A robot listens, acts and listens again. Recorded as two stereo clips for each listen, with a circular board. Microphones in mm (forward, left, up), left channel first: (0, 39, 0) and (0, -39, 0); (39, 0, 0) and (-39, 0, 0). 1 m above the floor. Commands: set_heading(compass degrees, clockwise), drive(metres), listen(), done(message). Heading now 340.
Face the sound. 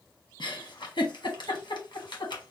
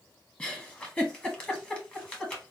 set_heading(270)
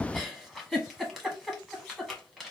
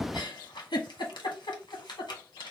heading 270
done("Facing the giggle, 1 to 2 m away.")